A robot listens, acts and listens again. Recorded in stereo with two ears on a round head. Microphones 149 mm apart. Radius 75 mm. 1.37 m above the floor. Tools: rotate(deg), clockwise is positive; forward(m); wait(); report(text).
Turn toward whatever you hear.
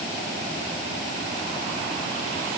wait()
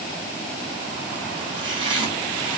rotate(30)
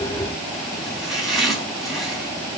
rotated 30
report("Facing the chopping, 2 to 4 m away.")